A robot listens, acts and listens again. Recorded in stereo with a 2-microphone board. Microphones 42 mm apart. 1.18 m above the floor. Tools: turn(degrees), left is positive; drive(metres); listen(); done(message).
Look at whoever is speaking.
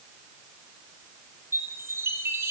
listen()
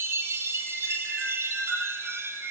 listen()
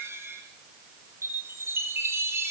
done("I can't make out anyone speaking to turn to.")